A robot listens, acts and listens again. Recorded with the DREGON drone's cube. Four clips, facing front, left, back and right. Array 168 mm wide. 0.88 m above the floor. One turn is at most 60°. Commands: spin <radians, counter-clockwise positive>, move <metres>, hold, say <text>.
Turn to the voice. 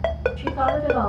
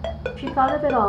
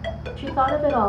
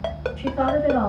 spin 1.05
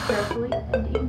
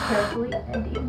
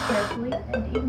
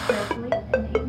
spin 0.96
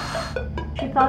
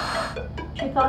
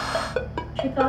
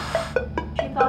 spin 0.35
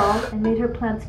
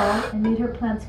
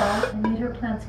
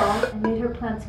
say Found it: a woman speaking, straight ahead.